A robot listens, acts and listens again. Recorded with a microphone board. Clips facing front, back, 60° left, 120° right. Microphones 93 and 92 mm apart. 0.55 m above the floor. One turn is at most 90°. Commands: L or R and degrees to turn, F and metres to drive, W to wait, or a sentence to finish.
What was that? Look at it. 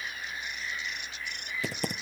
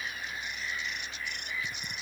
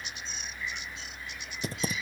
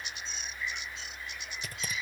Facing the typing on a keyboard.